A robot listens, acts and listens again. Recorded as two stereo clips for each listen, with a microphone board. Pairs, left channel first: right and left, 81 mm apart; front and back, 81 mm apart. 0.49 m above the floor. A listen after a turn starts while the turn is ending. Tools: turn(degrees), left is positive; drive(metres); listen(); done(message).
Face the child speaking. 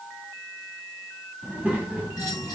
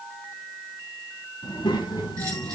turn(degrees=20)
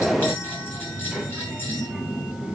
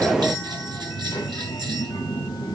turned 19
turn(degrees=15)
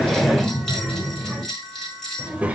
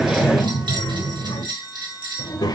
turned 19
turn(degrees=20)
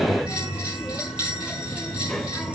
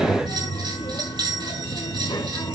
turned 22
done("Facing the child speaking, 1 to 2 m away.")